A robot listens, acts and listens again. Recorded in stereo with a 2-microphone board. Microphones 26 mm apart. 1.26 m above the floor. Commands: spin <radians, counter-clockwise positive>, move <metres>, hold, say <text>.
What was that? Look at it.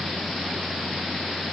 hold
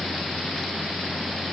hold
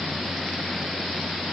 say I can't make out anything.